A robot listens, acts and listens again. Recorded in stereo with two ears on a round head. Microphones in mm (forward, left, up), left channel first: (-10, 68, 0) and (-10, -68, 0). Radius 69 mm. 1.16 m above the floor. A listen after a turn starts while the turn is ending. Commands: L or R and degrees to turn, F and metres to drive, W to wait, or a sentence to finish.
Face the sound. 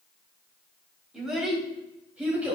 R30
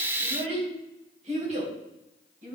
R125
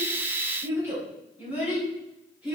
R10
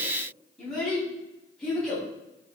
Facing the child speaking, over 4 m away.